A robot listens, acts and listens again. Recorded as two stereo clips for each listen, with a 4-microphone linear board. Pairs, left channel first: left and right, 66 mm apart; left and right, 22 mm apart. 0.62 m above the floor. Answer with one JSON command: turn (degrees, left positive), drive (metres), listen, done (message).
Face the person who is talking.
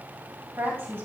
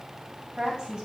{"turn": -40}
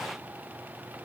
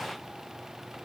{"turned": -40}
{"listen": true}
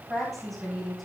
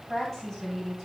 {"done": "Found it: a woman speaking, straight ahead, over 4 m away."}